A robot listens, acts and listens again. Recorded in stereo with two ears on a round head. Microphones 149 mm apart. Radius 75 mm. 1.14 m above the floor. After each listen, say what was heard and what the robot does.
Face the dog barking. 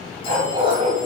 The dog barking: about 30° right or 150° right. Turn 30° right.
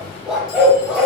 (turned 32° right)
Found it: a dog barking, straight ahead.